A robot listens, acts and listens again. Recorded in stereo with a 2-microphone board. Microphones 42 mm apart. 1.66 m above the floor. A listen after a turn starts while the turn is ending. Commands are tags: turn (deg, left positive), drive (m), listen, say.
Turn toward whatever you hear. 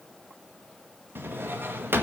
<turn deg="-60"/>
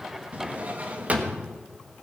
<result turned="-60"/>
<turn deg="-40"/>
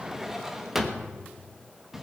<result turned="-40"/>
<turn deg="-10"/>
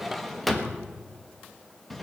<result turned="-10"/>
<say>Facing the drawer.</say>